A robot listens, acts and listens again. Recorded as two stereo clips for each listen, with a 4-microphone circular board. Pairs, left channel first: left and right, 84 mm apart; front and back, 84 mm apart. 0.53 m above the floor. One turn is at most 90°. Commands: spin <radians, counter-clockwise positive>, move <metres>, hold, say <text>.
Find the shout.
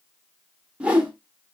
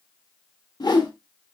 hold
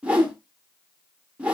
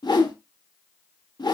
hold
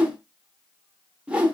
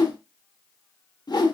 say I can't make out a shout, only a whoosh.